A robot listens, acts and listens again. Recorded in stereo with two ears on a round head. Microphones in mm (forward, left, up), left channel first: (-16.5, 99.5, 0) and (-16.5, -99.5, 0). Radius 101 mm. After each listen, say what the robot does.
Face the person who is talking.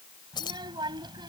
Turn 20° right.
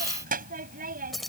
Turn 140° right.
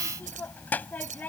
Found it: a child speaking, straight ahead.